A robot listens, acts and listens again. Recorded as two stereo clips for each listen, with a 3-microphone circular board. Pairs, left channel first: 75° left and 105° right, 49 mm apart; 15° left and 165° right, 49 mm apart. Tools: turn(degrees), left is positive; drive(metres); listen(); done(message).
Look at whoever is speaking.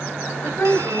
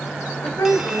turn(degrees=35)
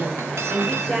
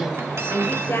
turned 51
turn(degrees=-15)
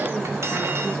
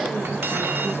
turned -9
listen()
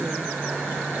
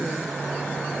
listen()
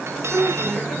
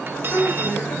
done("Found it: a woman speaking, straight ahead.")